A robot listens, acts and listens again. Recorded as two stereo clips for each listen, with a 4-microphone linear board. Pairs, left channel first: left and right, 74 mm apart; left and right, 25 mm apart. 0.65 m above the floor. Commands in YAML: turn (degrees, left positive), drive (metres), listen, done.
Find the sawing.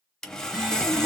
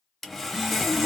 turn: 30
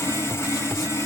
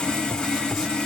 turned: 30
turn: 140
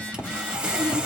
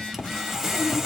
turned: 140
turn: -15
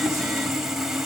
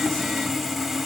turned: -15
done: "Facing the sawing."